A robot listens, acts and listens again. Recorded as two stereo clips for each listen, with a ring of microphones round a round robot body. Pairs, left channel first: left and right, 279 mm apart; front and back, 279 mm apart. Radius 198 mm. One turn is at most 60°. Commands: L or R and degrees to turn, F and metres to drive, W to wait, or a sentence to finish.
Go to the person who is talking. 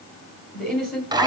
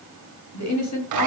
F1.0
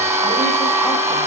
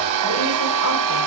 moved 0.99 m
W
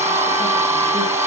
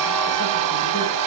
W
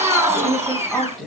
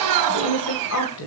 F1.0
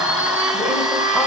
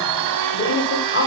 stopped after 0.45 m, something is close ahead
I am next to the woman speaking.